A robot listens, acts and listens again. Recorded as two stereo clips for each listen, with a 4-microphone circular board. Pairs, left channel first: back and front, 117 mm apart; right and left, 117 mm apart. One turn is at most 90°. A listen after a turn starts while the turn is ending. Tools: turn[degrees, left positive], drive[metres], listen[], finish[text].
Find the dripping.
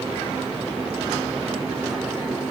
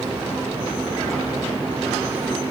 Action: listen[]
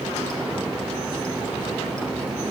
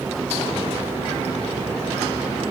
Action: listen[]
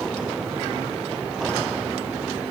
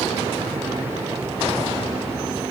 Action: finish[I can't make out dripping to turn to.]